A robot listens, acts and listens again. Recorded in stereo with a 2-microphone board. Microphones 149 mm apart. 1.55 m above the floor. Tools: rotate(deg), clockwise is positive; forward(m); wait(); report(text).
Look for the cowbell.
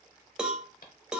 rotate(30)
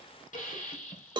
rotate(145)
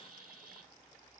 wait()
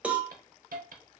rotate(10)
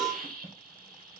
report("Facing the cowbell, under 1 m away.")